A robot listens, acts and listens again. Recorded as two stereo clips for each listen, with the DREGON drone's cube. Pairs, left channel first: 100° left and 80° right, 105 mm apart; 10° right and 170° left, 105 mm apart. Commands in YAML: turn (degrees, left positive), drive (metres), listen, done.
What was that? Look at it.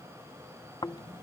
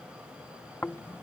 turn: 55
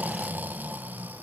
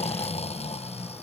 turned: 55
done: "Found it: snoring, straight ahead."